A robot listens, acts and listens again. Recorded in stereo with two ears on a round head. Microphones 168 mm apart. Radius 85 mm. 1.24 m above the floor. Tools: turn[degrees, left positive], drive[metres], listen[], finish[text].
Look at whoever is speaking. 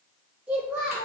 Action: turn[-30]
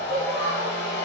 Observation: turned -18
Action: listen[]
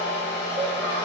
Action: listen[]
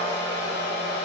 Action: finish[I heard a child speaking, but can't make it out now. It was about 10° left or 150° right.]